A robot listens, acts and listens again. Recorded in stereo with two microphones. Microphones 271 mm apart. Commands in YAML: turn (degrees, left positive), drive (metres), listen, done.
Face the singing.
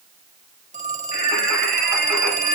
turn: -90
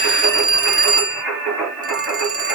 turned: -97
done: "Found it: singing, straight ahead."